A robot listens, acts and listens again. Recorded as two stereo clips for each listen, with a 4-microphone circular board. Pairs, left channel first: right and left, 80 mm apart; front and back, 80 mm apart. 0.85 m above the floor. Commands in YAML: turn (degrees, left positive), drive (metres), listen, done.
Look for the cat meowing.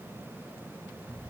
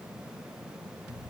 listen: true
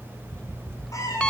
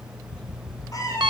turn: -45
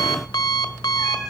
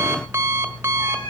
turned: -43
done: "Found it: a cat meowing, straight ahead, over 4 m away."